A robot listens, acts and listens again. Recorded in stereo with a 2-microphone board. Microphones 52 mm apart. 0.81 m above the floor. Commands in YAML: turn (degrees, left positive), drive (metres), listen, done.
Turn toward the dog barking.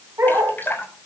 turn: -65
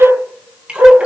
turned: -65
turn: -60
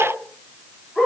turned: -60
done: "Facing the dog barking, over 4 m away."